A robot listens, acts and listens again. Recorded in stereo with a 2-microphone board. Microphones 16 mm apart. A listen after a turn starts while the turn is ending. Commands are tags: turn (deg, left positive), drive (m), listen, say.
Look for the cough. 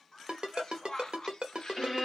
<turn deg="45"/>
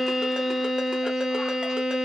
<listen/>
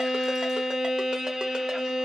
<listen/>
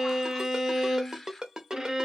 <turn deg="10"/>
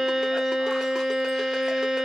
<listen/>
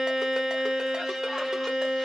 <listen/>
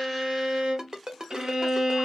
<say>Facing where the cough came from. I can't hear it now.</say>